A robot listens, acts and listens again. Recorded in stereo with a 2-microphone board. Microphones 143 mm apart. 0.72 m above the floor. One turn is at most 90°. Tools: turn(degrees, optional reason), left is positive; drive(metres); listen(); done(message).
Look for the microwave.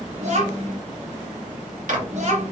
turn(degrees=-65, reason="The microwave: about 65° right or 115° right.")
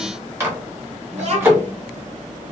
turn(degrees=-20, reason="So it is at 20° right.")
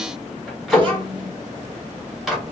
done("Found it: a microwave, straight ahead.")